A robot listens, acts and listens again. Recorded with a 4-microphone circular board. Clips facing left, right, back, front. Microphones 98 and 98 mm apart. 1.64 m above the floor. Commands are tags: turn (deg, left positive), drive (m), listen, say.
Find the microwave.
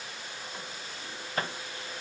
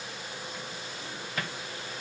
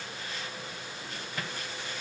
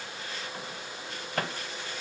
<turn deg="35"/>
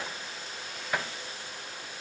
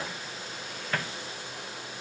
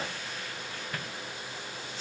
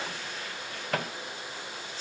<turn deg="10"/>
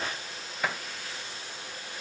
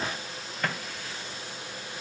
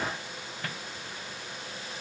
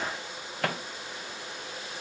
<turn deg="10"/>
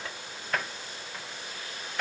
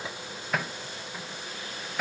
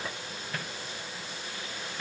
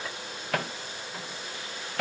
<say>Found it: a microwave, straight ahead.</say>